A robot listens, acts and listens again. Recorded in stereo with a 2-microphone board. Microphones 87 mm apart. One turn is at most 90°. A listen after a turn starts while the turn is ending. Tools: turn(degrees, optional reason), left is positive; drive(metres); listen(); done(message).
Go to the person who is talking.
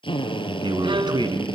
turn(degrees=-60, reason="The man speaking: about 60° right or 120° right.")
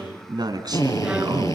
turn(degrees=-55, reason="So it is at 55° right.")
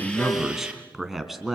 drive(metres=1.0)
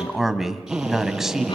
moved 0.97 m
drive(metres=1.0)
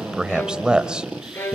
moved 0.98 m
turn(degrees=-15, reason="The man speaking is now 15° right.")
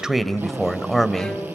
drive(metres=1.0)
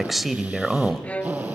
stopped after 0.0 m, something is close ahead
done("Arrived at the man speaking, straight ahead.")